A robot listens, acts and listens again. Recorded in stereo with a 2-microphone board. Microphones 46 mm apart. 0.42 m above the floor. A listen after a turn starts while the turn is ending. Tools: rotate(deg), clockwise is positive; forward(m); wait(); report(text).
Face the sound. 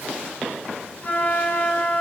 rotate(-40)
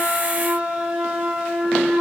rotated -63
rotate(20)
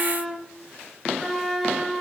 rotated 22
report("Found it: a flute, straight ahead.")